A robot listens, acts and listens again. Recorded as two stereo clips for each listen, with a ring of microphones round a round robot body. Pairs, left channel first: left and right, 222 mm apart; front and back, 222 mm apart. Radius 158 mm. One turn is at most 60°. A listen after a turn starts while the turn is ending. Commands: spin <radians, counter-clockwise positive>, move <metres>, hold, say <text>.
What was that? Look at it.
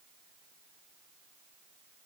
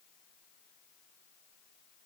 hold
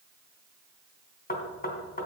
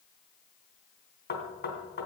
spin 0.70
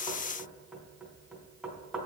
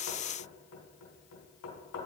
say Facing the knocking, 2 to 4 m away.